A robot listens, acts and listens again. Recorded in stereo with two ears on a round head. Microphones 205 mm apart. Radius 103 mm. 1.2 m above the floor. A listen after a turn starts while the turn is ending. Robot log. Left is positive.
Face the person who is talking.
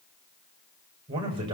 note: The man speaking: about 25° right or 155° right.
cmd yaw -25
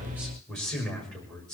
end: Facing the man speaking, over 4 m away.